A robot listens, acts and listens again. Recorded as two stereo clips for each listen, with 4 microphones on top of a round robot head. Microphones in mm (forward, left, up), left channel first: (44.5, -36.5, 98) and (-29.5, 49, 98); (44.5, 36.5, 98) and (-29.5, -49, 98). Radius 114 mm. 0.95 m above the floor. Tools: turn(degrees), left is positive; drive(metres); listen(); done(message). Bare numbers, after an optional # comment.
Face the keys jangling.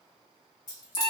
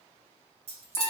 # The keys jangling: 105° right.
turn(-105)
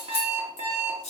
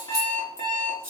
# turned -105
# The keys jangling is now 20° right.
turn(-20)
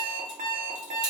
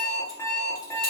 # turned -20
listen()
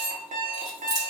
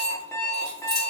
# The keys jangling is now 10° right.
turn(-10)
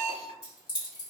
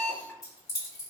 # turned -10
done("Facing the keys jangling, 2 to 4 m away.")